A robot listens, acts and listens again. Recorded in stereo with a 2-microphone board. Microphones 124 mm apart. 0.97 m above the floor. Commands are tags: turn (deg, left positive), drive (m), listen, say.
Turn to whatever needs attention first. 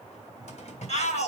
<turn deg="65"/>
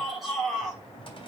<say>Facing the shout.</say>